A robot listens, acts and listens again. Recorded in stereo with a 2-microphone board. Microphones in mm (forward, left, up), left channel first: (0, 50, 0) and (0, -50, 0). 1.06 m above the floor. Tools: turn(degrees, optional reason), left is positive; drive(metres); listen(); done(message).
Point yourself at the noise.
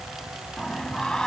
turn(degrees=30)
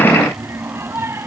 turn(degrees=-25, reason="So it is at 25° right.")
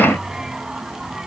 done("Facing the singing.")